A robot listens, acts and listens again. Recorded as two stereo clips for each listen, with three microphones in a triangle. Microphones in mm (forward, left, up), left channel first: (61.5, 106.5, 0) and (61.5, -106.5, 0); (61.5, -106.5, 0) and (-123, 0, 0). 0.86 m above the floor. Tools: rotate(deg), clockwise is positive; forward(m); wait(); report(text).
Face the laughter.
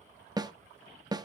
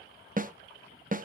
wait()
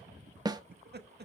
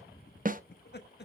rotate(60)
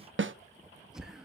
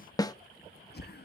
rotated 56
report("Found it: laughter, straight ahead, 1 to 2 m away.")